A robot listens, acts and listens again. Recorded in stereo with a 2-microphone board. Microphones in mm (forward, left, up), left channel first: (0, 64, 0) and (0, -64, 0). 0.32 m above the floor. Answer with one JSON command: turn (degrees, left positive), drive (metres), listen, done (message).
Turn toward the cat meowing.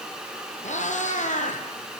{"turn": 75}
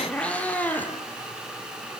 {"turn": 15}
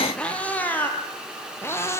{"turn": 20}
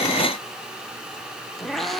{"done": "Facing the cat meowing, 2 to 4 m away."}